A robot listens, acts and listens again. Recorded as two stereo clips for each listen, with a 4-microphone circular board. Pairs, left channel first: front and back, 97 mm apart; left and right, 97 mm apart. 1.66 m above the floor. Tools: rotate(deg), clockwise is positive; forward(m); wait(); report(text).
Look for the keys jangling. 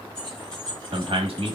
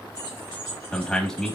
rotate(80)
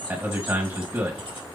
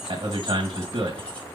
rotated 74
rotate(-20)
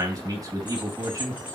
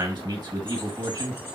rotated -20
wait()
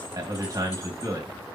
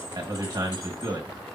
wait()
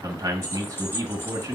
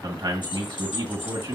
rotate(-65)
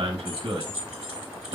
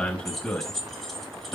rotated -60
report("Found it: keys jangling, straight ahead, 1 to 2 m away.")